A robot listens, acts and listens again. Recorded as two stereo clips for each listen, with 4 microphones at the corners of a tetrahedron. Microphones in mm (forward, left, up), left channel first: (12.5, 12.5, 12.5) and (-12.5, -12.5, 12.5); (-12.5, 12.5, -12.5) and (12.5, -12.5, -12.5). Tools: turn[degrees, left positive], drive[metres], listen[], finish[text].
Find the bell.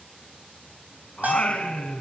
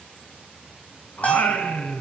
Thought: The bell: 175° right.
Action: turn[-175]
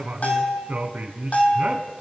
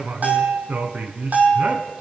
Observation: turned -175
Action: finish[Facing the bell, 2 to 4 m away.]